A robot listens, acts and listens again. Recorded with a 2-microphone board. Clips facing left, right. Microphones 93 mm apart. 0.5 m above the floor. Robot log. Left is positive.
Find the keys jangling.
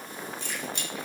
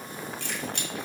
note: The keys jangling: about 65° right or 115° right.
cmd yaw -65
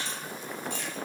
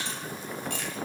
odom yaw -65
note: So it is at 75° right.
cmd yaw -75
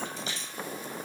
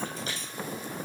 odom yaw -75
note: The keys jangling is now 55° right.
cmd yaw -55
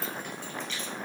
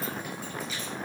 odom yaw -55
cmd idle
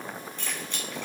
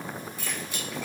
note: The keys jangling is now 10° right.
cmd yaw -10
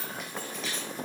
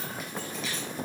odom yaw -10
end: Found it: keys jangling, straight ahead.